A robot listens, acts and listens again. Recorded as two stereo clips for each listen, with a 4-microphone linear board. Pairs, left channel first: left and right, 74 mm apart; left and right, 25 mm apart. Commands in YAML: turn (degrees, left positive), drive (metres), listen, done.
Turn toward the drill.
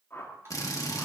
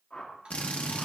turn: 50
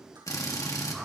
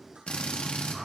turn: 60
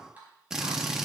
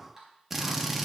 turn: -10
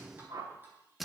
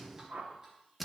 done: "Found it: a drill, straight ahead."